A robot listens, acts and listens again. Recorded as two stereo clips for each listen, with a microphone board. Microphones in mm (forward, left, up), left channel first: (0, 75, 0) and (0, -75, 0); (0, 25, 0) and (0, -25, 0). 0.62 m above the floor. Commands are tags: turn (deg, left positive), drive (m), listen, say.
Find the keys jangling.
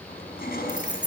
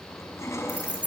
<turn deg="-30"/>
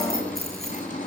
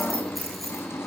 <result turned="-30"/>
<listen/>
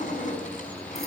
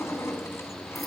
<listen/>
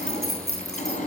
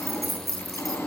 <say>Facing the keys jangling.</say>